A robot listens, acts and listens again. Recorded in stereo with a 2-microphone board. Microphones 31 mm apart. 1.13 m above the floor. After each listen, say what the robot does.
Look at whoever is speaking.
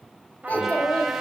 Turn 70° left.
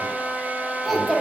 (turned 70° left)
Facing the child speaking, 1 to 2 m away.